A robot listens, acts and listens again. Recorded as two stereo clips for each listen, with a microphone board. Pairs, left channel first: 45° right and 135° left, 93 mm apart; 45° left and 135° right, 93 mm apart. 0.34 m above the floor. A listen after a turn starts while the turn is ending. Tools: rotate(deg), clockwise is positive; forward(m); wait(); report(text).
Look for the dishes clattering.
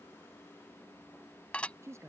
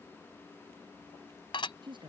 rotate(-30)
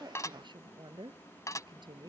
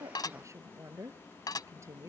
report("Found it: dishes clattering, straight ahead.")